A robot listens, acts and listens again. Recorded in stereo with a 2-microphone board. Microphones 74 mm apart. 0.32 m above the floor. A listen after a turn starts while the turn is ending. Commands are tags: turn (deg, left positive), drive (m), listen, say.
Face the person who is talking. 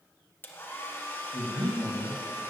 <turn deg="30"/>
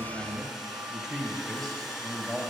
<turn deg="30"/>
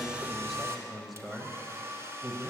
<turn deg="30"/>
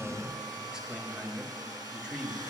<turn deg="-10"/>
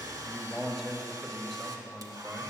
<say>Facing the man speaking, 1 to 2 m away.</say>